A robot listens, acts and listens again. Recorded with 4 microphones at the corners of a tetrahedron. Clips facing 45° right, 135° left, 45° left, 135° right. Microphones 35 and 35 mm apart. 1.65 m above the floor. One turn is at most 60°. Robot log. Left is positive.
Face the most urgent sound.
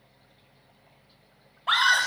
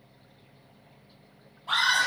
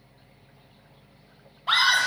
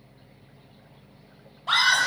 note: The scream: 30° right.
cmd yaw -30
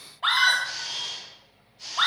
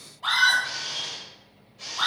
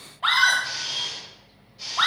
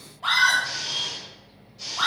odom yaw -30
end: Facing the scream.